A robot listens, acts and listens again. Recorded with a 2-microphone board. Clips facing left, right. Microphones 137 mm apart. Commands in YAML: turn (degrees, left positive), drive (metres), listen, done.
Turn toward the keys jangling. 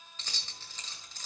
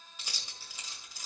turn: -30
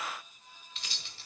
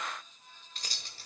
turn: -140
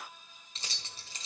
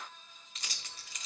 turn: 30
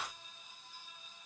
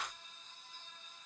listen: true
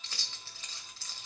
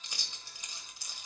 turn: -15
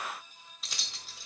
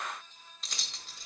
done: "Found it: keys jangling, straight ahead."